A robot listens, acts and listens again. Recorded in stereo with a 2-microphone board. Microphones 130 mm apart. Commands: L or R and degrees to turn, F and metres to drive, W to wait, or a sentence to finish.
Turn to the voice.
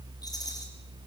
W
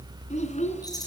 L70
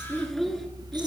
Facing the child speaking.